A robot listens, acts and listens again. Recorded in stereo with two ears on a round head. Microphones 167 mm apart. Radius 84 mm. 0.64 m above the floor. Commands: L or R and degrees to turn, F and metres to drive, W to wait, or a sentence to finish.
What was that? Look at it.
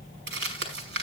R55
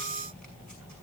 W
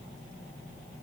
W
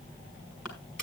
I heard crumpling, but can't make it out now. It was about straight ahead or 70° right.